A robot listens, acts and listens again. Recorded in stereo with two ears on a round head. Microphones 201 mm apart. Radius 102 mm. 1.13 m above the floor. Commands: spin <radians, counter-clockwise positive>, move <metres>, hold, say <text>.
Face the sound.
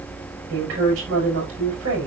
spin -1.13
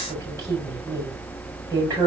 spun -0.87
spin -0.26
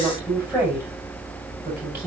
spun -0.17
say Found it: a woman speaking, straight ahead, over 4 m away.